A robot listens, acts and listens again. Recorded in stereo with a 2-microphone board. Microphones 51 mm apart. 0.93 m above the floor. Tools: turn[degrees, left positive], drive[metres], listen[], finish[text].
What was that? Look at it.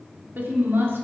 Thought: The woman speaking: about 50° right or 130° right.
Action: turn[-50]
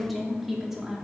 Thought: So it is at 10° right.
Action: turn[-10]
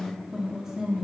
Thought: The woman speaking is now 15° right.
Action: turn[-15]
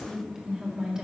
Thought: The woman speaking is now 15° right.
Action: turn[-15]
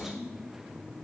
Thought: The woman speaking is now 10° right.
Action: turn[-10]
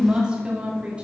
Thought: The woman speaking is now 25° right.
Action: turn[-25]
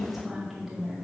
Action: finish[Facing the woman speaking, 2 to 4 m away.]